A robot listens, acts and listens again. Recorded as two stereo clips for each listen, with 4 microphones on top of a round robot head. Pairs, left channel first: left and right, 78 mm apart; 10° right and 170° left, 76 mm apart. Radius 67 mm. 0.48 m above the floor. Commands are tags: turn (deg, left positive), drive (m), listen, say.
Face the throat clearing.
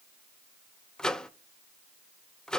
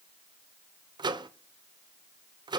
<listen/>
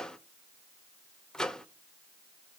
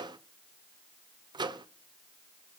<listen/>
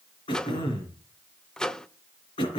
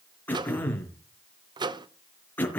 <turn deg="60"/>
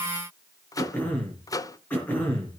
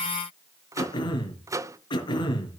<turn deg="15"/>
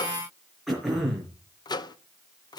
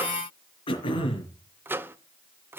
<say>Facing the throat clearing.</say>